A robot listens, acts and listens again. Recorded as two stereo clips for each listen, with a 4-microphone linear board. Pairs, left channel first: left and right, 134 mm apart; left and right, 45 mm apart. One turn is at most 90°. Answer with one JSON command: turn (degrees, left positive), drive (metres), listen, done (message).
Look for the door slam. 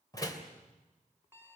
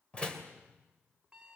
{"turn": 25}
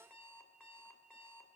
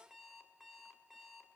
{"listen": true}
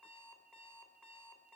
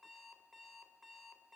{"done": "I heard a door slam, but can't make it out now. It was about straight ahead or 130° left."}